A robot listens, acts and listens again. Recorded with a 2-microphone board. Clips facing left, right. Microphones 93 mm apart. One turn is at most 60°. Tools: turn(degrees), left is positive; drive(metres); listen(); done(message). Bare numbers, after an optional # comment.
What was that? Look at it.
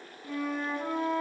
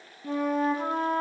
# The flute: about 45° right or 135° right.
turn(-45)
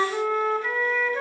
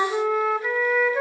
# So it is at 10° right.
turn(-10)
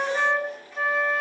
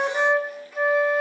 done("Facing the flute.")